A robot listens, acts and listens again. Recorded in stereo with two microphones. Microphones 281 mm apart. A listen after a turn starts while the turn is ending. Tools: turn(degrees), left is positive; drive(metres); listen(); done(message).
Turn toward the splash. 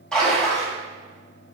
turn(degrees=30)
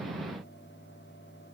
listen()
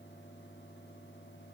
done("I heard a splash, but can't make it out now. It was about 25° right or 145° left.")